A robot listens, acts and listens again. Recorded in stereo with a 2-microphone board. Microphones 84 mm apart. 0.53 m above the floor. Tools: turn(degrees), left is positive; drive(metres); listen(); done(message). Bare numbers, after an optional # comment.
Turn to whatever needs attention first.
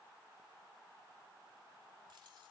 listen()
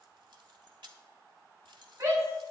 # The shout: about 35° right or 145° right.
turn(-35)
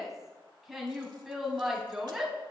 done("Found it: a shout, straight ahead.")